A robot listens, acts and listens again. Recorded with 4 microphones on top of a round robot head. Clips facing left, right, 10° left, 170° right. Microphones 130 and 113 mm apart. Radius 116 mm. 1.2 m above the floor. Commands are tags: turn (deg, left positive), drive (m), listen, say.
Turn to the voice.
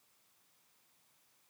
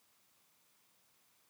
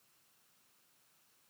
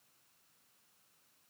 <listen/>
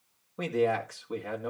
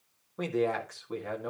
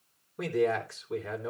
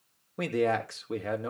<turn deg="175"/>
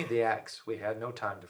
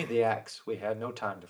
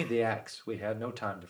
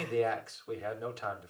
<turn deg="-15"/>
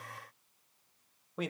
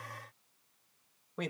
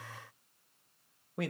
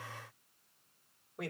<say>Found it: a man speaking, straight ahead, 2 to 4 m away.</say>